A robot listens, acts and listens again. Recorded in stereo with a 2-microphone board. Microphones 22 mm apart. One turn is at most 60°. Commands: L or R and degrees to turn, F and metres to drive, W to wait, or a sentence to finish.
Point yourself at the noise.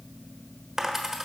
R30
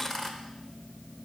L15
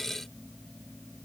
I heard a dropped coin from this way, but can't make it out now.